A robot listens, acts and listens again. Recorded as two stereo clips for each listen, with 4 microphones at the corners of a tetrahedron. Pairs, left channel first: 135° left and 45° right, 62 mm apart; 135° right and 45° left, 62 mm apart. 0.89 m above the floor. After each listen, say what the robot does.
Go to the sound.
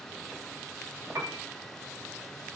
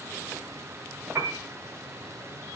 Drive 1.0 m forward.
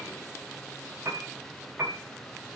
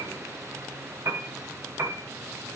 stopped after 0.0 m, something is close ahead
Blocked. The piano is further on, straight ahead.